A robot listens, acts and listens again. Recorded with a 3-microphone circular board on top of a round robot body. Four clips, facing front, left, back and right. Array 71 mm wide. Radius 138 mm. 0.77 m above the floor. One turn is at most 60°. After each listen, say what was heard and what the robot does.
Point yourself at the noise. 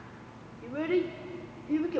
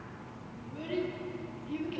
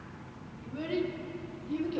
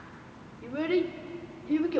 The child speaking: 60° right. Turn 60° right.
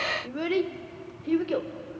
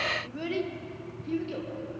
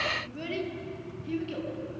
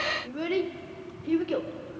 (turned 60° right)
The child speaking is now 30° right. Turn 30° right.
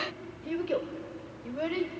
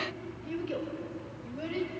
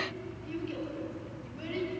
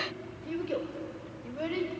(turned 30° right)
The child speaking is now 15° right. Turn 15° right.
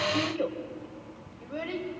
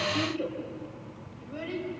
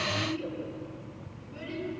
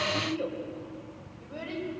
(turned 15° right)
Found it: a child speaking, straight ahead.